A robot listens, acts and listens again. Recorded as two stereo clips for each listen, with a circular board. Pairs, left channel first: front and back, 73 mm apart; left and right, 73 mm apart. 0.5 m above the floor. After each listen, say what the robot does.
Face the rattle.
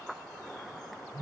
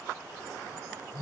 Keep listening.
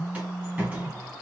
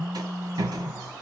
Turn 110° right.
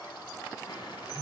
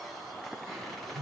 Keep listening.
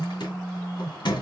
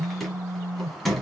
Facing the rattle.